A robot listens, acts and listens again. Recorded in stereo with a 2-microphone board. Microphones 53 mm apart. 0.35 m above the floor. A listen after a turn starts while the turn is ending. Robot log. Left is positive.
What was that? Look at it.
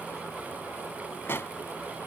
note: The pop: about 45° left or 135° left.
cmd yaw +45
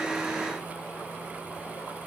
cmd idle
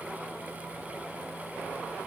end: I heard a pop, but can't make it out now. It was about straight ahead or 90° left.